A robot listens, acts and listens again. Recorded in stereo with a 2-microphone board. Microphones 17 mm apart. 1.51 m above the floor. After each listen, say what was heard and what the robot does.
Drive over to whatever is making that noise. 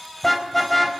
Turn 30° left.
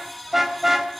So it is at 20° right. Turn 20° right.
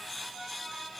Keep listening.
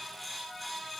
Keep listening.
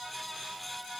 I heard a car horn from this way, but can't make it out now. I did not reach it.